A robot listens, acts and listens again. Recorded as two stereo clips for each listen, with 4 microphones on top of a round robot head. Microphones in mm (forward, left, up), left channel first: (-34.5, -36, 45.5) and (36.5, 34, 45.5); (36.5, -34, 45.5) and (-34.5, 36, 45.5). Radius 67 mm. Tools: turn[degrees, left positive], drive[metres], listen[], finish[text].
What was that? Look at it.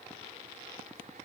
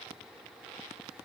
Action: listen[]
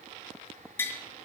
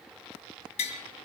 Thought: The tapping: 65° right.
Action: turn[-65]
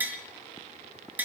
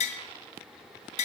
Thought: The tapping is now 30° right.
Action: turn[-30]
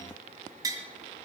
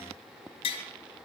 Thought: The tapping is now 10° right.
Action: turn[-10]
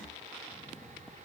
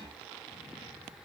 Action: listen[]
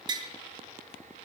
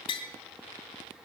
Action: finish[Found it: tapping, straight ahead.]